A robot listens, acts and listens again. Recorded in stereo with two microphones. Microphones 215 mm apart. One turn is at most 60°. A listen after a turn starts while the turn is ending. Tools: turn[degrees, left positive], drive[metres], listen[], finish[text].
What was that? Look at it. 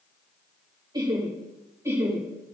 Action: turn[-30]
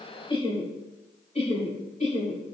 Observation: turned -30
Thought: So it is at 35° left.
Action: turn[35]
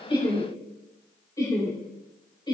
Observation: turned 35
Thought: The laughter is now 20° left.
Action: turn[20]
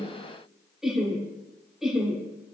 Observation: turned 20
Action: finish[Facing the laughter.]